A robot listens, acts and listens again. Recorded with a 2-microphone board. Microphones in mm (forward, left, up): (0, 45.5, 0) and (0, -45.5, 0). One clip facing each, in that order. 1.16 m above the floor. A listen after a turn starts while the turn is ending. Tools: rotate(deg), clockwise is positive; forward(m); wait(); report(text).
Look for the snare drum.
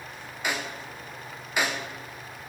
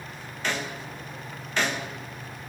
rotate(-30)
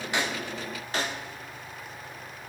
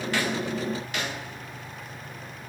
rotate(-135)
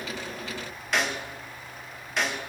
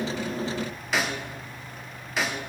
report("Found it: a snare drum, straight ahead, under 1 m away.")